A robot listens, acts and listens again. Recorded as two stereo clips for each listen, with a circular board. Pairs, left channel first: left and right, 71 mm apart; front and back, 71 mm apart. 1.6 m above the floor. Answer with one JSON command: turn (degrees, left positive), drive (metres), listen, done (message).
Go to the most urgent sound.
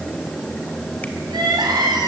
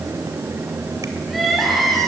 {"turn": -90}
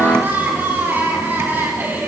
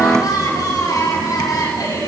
{"turn": -30}
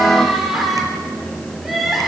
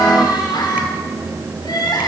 {"drive": 1.0}
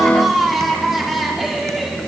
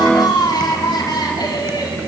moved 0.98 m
{"drive": 1.0}
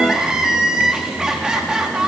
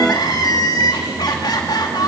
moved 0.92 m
{"turn": -10}
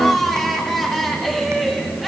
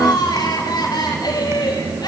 {"drive": 1.0}
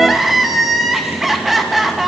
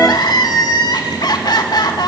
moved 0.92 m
{"drive": 1.0}
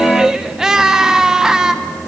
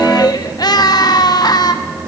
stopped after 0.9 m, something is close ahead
{"turn": -10}
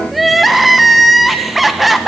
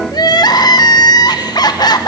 {"done": "Arrived at the crying, straight ahead."}